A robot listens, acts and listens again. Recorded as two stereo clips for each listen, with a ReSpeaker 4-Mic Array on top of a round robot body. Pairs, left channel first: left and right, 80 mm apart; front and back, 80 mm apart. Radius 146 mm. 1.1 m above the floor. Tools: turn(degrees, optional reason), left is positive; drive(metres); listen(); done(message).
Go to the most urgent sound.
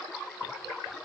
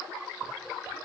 listen()
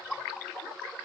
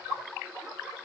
listen()
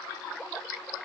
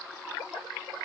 done("I can't make out anything urgent.")